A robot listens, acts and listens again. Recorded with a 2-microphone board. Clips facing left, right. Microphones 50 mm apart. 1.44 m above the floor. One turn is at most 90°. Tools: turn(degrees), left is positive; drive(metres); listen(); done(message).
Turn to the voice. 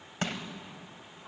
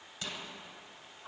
listen()
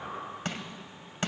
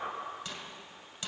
listen()
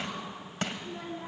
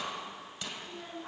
turn(degrees=50)
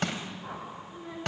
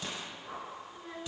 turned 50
done("Found it: a child speaking, straight ahead.")